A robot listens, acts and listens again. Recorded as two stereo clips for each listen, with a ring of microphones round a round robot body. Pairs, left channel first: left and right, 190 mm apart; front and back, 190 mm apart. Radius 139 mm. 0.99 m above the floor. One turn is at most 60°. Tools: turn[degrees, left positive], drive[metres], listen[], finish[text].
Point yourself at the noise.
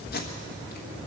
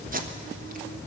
Thought: The tape being pulled: 135° left.
Action: turn[60]
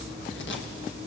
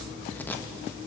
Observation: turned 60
Thought: Nothing new. It was at 75° left.
Action: turn[60]
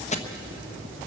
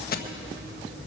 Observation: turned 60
Thought: The tape being pulled is now 35° left.
Action: turn[35]
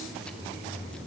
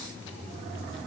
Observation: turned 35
Action: listen[]
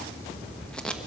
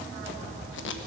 Action: finish[Found it: tape being pulled, straight ahead.]